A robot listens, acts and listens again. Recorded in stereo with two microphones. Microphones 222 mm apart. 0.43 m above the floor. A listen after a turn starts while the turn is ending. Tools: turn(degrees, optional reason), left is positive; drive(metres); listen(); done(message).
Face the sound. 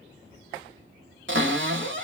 turn(degrees=-60, reason="The cupboard door: about 60° right or 120° right.")
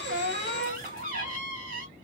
turn(degrees=-45, reason="So it is at 45° right.")
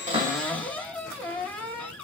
turn(degrees=10, reason="The cupboard door is now 10° left.")
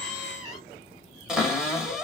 done("Facing the cupboard door, 1 to 2 m away.")